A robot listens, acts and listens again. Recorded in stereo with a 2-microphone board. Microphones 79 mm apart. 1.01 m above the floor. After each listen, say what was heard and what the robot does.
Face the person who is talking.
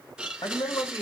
The man speaking: about 70° left or 110° left. Turn 70° left.
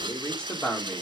So it is at 10° left. Turn 10° left.
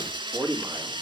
The man speaking is now 15° right. Turn 15° right.
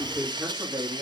The man speaking is now 15° right. Turn 15° right.
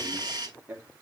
The man speaking is now 15° right. Turn 15° right.
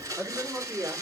The man speaking is now 15° right. Turn 15° right.
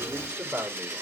Facing the man speaking, 2 to 4 m away.